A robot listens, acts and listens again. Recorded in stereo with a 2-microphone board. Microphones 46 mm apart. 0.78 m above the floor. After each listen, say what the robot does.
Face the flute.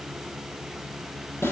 Keep listening.
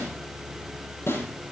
Keep listening.
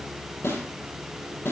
I can't make out a flute to turn to.